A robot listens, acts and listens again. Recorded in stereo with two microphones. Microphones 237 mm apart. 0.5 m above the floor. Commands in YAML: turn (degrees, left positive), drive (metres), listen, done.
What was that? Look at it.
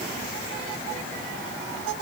listen: true
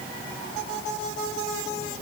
listen: true
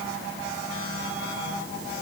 done: "I can't make out anything to turn to."